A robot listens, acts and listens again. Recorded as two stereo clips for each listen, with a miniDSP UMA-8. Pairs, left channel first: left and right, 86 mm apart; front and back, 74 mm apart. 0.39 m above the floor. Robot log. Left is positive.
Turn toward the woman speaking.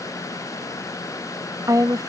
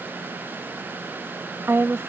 note: The woman speaking: 130° right.
cmd yaw -130
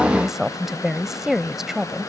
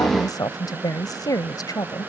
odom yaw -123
end: Facing the woman speaking.